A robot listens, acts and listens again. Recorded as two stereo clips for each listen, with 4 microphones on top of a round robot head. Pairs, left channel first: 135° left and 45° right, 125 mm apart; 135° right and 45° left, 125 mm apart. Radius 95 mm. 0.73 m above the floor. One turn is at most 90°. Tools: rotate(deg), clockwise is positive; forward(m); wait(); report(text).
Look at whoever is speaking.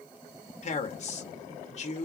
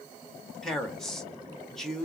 rotate(-90)
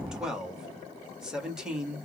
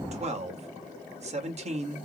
rotate(-40)
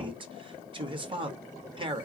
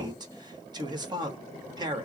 report("Found it: a man speaking, straight ahead.")